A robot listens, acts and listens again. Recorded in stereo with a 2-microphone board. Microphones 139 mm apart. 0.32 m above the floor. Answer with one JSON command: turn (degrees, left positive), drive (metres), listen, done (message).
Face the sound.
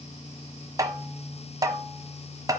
{"turn": -25}
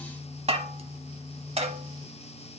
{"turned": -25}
{"turn": -125}
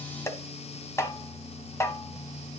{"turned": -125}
{"turn": 20}
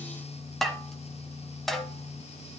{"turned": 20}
{"done": "Facing the tapping, 1 to 2 m away."}